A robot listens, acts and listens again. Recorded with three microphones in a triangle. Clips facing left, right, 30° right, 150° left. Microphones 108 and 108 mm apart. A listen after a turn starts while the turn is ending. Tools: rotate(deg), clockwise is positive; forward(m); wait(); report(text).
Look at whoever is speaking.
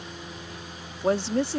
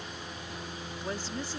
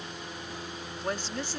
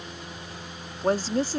rotate(-105)
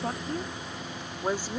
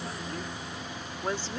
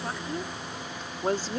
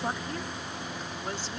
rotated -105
rotate(-15)
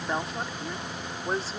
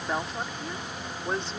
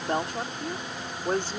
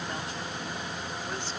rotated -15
report("Found it: a woman speaking, straight ahead.")